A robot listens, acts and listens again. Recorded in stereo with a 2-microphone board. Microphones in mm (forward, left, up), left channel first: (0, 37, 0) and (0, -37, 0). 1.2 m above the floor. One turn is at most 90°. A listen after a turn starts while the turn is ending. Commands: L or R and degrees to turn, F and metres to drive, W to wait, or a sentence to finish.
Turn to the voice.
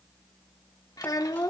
L55
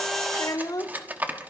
L65
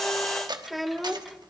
Facing the child speaking, 1 to 2 m away.